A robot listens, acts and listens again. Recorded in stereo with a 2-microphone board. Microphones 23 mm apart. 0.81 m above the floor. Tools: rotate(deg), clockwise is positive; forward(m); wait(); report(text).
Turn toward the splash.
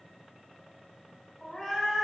wait()
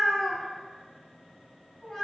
wait()
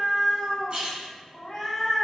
rotate(50)
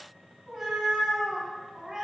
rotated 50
wait()
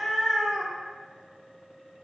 report("I heard a splash, but can't make it out now. It was about straight ahead or 80° right.")